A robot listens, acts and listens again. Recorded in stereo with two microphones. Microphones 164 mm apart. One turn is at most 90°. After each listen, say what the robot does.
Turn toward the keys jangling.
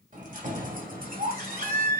Turn 65° right.
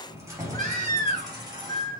Turn 25° right.
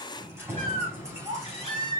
Turn 20° right.
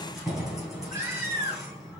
Facing the keys jangling, 2 to 4 m away.